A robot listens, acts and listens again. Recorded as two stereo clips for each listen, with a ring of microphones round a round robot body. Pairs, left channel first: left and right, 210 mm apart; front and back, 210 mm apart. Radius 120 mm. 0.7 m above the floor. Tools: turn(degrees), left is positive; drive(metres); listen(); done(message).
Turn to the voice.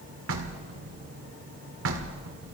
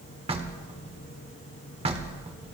listen()
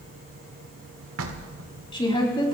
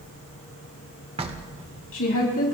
turn(degrees=25)
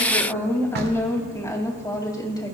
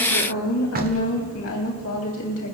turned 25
turn(degrees=20)
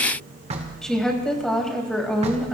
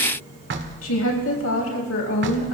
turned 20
done("Found it: a woman speaking, straight ahead, 2 to 4 m away.")